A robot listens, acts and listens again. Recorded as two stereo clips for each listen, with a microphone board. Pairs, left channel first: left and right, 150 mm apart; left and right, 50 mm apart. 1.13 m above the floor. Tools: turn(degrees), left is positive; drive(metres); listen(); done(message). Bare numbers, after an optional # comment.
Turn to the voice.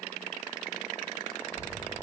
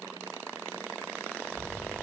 turn(90)
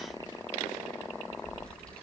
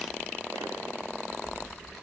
done("Found it: a child speaking, straight ahead.")